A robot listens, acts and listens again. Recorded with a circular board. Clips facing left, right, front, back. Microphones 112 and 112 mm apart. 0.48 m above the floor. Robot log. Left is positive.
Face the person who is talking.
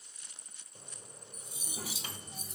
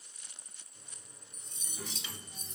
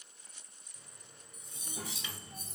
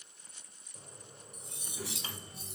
note: The child speaking: 45° left.
cmd yaw +45
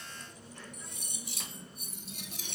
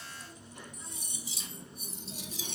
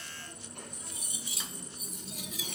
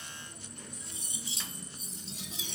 note: The child speaking is now 35° right.
cmd yaw -35
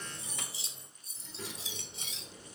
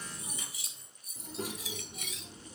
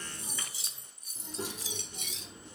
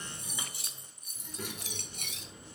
note: The child speaking is now 50° right.
cmd yaw -50
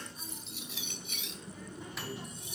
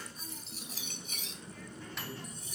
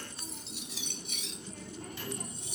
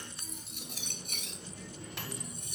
note: The child speaking is now 20° left.
cmd yaw +20
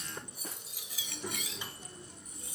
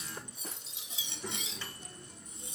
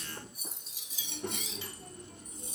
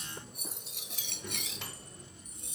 end: Found it: a child speaking, straight ahead, 1 to 2 m away.